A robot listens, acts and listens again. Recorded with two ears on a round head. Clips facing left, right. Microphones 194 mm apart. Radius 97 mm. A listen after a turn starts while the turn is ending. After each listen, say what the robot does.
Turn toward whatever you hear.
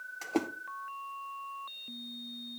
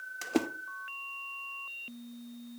Turn 15° right.
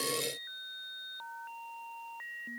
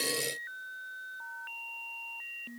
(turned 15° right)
Keep listening.
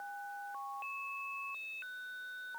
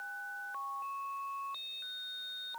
I heard a splash, but can't make it out now. It was about straight ahead or 150° right.